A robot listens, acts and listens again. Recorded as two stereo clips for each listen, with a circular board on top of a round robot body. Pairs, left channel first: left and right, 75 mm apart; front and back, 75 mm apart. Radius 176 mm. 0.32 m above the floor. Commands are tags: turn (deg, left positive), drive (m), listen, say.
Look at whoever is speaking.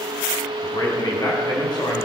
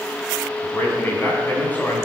<turn deg="70"/>
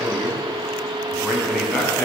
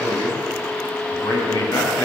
<say>Found it: a man speaking, straight ahead.</say>